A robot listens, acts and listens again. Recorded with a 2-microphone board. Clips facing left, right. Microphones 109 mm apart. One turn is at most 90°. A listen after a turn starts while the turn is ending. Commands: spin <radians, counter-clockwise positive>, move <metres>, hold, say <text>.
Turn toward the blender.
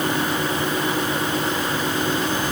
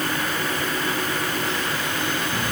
hold
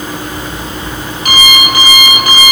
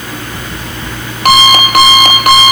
hold
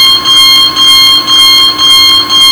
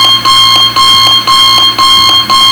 say I can't make out a blender, only an alarm clock.